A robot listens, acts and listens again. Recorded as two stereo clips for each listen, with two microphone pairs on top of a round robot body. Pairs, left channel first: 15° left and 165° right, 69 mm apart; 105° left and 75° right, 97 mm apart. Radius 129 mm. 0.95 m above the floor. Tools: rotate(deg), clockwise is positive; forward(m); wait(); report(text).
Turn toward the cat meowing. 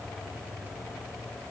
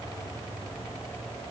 wait()
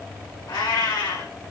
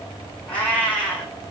rotate(-30)
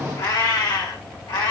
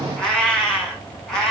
rotate(-20)
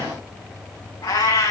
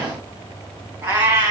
rotate(10)
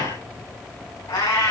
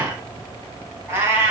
report("Found it: a cat meowing, straight ahead.")